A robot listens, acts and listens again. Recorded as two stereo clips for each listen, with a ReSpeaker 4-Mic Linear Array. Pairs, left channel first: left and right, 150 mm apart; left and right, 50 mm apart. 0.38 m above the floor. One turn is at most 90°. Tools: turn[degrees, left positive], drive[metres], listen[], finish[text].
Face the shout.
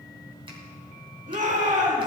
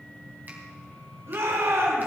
Thought: The shout: about 60° right or 120° right.
Action: turn[-60]
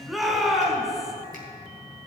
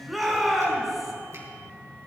Action: finish[Found it: a shout, straight ahead.]